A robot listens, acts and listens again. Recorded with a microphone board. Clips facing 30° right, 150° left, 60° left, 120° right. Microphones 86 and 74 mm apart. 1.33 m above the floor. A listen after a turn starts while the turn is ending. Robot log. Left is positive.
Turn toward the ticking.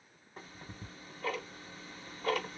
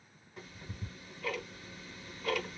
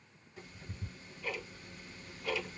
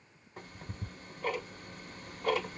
note: The ticking: 85° right.
cmd yaw -85
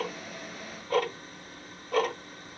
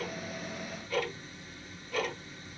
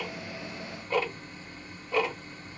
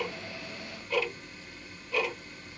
note: The ticking is now 10° left.
cmd yaw +10
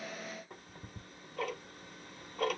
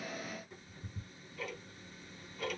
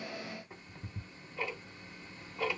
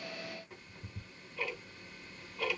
end: Found it: ticking, straight ahead.